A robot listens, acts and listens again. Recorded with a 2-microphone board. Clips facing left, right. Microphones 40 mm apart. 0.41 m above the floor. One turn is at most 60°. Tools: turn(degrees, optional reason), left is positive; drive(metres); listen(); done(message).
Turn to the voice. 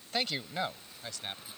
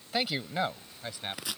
turn(degrees=-15, reason="The man speaking: about 15° right or 165° right.")
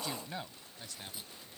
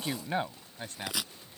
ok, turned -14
turn(degrees=-40, reason="The man speaking: about 40° right or 140° right.")
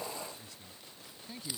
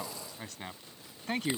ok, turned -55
turn(degrees=-60, reason="So it is at 65° right.")
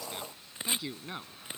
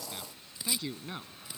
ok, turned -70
done("Found it: a man speaking, straight ahead.")